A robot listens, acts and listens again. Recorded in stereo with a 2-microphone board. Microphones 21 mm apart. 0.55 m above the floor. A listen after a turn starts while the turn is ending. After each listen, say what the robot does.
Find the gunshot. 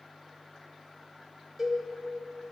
Keep listening.
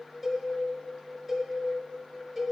Keep listening.
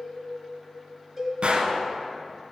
Turn 75° right.
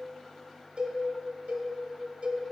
Keep listening.
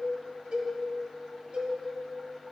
I heard a gunshot, but can't make it out now. It was about straight ahead or 30° right.